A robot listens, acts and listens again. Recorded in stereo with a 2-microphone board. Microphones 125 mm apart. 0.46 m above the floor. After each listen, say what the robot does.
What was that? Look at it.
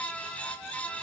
Keep listening.
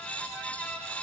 Keep listening.
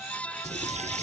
Turn 65° right.
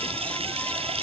Turn 50° right.
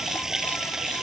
Found it: a running tap, straight ahead.